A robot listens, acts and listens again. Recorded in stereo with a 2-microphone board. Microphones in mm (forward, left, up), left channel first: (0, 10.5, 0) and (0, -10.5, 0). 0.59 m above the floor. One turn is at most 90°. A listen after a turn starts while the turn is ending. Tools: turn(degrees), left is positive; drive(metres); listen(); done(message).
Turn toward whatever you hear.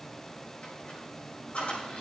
turn(degrees=90)
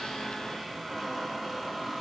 done("Facing the squeak, over 4 m away.")